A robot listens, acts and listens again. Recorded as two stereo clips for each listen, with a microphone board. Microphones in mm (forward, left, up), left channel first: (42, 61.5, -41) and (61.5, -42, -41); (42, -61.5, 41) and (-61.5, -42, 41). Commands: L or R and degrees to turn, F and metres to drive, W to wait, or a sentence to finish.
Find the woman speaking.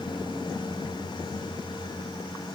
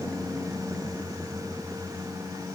W
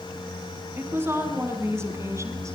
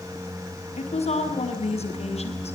R15
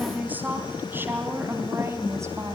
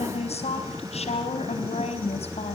R15
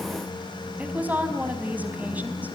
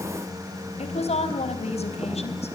Found it: a woman speaking, straight ahead, over 4 m away.